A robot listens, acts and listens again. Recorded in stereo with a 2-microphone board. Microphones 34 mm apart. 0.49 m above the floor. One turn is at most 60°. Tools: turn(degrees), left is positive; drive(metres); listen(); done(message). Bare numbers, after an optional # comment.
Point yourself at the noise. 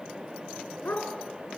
# The dog barking: about 65° left or 115° left.
turn(60)
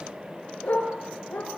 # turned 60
# So it is at 50° left.
turn(50)
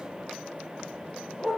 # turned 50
done("Facing the dog barking, over 4 m away.")